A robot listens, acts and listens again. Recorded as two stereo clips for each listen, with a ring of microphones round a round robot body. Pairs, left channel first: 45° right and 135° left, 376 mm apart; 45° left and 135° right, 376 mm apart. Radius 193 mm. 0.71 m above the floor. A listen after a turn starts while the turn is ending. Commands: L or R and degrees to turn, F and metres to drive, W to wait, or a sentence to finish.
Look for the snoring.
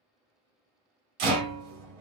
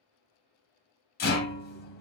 W
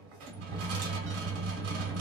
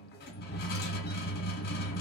W
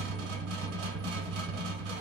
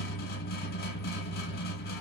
I can't make out snoring to turn to.